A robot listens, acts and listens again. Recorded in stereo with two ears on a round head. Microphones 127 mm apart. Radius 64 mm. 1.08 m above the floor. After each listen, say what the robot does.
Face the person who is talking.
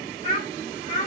Turn 50° left.
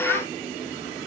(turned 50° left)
Keep listening.
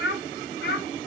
Turn 80° left.
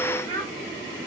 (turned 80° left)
Turn 15° left.
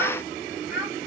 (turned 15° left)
Found it: a child speaking, straight ahead.